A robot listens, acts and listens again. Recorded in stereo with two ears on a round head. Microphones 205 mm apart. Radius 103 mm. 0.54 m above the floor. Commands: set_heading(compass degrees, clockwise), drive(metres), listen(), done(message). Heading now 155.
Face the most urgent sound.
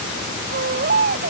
set_heading(200)
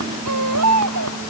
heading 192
set_heading(292)
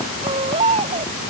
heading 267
set_heading(292)
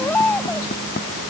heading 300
done("Found it: a baby crying, straight ahead.")